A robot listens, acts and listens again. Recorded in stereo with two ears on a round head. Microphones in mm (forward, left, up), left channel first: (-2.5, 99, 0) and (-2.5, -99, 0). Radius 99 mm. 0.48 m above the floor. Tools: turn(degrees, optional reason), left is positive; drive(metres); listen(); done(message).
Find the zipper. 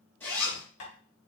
turn(degrees=30)
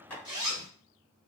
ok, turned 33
turn(degrees=-25, reason="So it is at 25° right.")
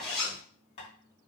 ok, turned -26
done("Facing the zipper.")